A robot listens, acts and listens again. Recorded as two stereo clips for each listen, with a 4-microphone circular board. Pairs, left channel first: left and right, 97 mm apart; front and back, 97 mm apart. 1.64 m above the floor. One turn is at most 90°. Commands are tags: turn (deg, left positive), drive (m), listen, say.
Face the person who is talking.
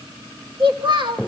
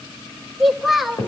<turn deg="-90"/>
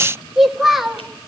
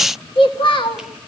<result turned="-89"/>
<say>Found it: a child speaking, straight ahead.</say>